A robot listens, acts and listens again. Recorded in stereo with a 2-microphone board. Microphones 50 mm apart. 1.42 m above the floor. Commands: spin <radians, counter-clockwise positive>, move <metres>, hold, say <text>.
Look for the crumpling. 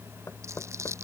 spin -1.22
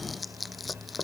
say Facing the crumpling.